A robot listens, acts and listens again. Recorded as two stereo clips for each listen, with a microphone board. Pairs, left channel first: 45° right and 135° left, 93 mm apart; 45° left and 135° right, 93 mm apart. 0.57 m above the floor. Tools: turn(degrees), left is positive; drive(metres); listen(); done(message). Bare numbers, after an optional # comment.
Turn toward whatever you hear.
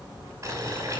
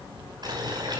# The boiling: 170° right.
turn(-170)
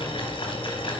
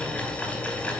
# The boiling is now 30° right.
turn(-30)
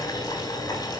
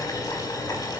done("Found it: boiling, straight ahead, over 4 m away.")